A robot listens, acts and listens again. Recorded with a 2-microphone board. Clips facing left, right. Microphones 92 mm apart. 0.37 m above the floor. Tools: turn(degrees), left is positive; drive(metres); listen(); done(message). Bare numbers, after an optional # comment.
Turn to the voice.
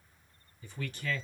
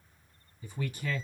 turn(-30)
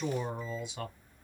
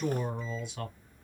# So it is at 15° left.
turn(15)
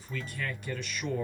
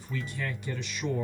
done("Found it: a man speaking, straight ahead.")